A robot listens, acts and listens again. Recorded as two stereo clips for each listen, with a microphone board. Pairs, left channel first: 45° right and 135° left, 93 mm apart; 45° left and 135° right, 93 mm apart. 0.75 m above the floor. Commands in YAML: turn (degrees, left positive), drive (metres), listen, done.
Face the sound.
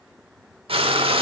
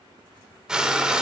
turn: 145
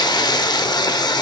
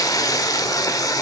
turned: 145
done: "Facing the frying."